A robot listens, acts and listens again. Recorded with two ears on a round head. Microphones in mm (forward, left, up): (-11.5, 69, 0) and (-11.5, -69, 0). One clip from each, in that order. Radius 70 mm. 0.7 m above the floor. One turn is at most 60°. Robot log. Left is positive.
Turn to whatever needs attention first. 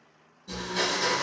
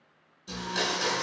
cmd idle
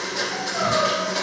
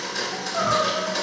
note: The crying: about 45° right or 135° right.
cmd yaw -45
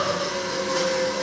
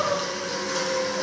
end: Facing the crying, 1 to 2 m away.